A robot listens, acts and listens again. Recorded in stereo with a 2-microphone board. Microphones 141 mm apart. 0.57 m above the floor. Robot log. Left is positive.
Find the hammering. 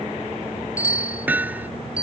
cmd yaw -30
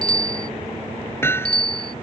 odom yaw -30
note: So it is at 15° left.
cmd yaw +15
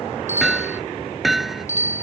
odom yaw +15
end: Facing the hammering.